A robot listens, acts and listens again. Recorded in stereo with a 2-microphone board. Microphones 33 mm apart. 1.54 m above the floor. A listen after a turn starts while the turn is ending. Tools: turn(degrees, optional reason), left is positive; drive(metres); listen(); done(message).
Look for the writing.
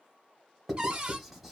turn(degrees=30)
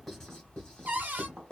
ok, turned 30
turn(degrees=145, reason="So it is at 145° left.")
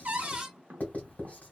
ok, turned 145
turn(degrees=50, reason="The writing is now 50° left.")
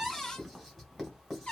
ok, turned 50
done("Found it: writing, straight ahead, 1 to 2 m away.")